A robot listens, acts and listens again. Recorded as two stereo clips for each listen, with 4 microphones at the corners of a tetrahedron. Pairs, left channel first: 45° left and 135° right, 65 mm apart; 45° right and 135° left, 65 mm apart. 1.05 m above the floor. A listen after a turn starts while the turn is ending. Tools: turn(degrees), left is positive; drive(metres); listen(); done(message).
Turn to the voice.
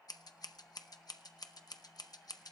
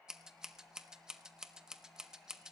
listen()
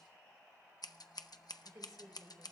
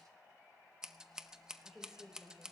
turn(degrees=-145)
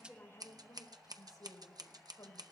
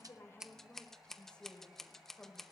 turn(degrees=30)
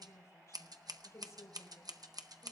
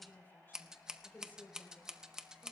turn(degrees=10)
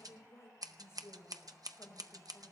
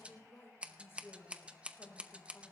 done("Facing the woman speaking, 2 to 4 m away.")